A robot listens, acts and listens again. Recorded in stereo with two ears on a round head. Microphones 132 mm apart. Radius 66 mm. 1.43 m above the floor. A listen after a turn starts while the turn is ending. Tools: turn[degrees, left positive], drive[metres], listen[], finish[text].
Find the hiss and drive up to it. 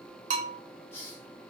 Thought: The hiss: about 15° left or 165° left.
Action: turn[15]
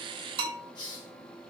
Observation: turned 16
Thought: So it is at 150° left.
Action: turn[150]
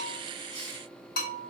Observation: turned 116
Thought: Nothing new. It was at 35° left.
Action: turn[35]
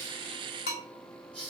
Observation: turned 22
Thought: The hiss is now 10° left.
Action: turn[10]
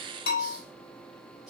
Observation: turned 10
Action: drive[1.0]
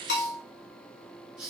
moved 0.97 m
Action: drive[1.0]
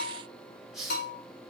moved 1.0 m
Action: drive[1.0]
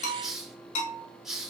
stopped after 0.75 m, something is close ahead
Action: finish[I am next to the hiss.]